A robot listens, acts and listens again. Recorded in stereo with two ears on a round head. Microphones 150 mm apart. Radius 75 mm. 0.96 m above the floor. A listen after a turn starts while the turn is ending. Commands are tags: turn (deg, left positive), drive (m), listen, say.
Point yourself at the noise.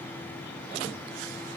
<listen/>
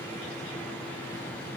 <listen/>
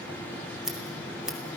<turn deg="-30"/>
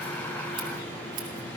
<listen/>
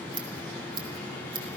<turn deg="-145"/>
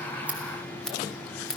<say>Found it: scissors, straight ahead, 2 to 4 m away.</say>